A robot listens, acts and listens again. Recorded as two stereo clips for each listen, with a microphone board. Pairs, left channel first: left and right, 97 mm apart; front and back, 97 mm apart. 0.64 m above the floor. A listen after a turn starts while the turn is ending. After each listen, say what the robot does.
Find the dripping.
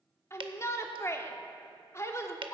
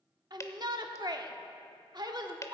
Turn 60° right.
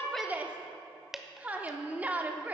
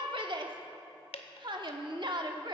Found it: dripping, straight ahead.